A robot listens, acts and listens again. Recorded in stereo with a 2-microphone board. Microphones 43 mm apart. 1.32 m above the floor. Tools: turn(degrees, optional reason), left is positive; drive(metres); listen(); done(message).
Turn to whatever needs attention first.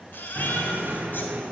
turn(degrees=55, reason="The baby crying: about 55° left or 125° left.")
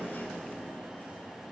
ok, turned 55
listen()
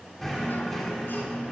listen()
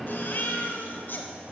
turn(degrees=60, reason="So it is at 60° left.")
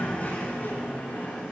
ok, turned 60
listen()
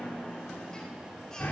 listen()
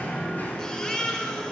turn(degrees=20, reason="The baby crying is now 20° left.")
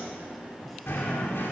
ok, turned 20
listen()
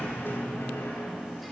listen()
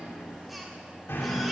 done("Facing where the baby crying came from. I can't hear it now.")